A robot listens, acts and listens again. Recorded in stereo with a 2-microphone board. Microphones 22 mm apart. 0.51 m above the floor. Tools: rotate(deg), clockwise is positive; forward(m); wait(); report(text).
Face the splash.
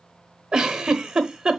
wait()
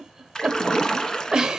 rotate(-30)
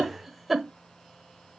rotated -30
wait()
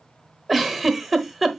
report("I heard a splash, but can't make it out now. It was about straight ahead or 120° left.")